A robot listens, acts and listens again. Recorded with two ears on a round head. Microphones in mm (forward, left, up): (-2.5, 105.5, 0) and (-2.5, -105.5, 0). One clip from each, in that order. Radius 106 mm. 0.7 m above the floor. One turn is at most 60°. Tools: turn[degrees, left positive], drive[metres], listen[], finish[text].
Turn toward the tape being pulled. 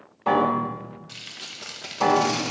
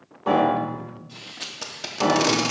Thought: The tape being pulled: about 40° right or 140° right.
Action: turn[-40]
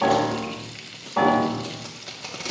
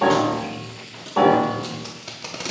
Action: finish[Facing the tape being pulled, under 1 m away.]